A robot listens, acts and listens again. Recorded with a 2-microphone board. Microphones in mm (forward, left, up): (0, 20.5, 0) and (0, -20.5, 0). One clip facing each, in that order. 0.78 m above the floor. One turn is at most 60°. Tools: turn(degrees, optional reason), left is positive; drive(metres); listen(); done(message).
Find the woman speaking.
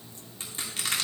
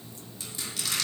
listen()
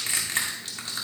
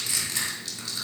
listen()
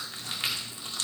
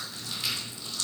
done("I can't make out a woman speaking to turn to.")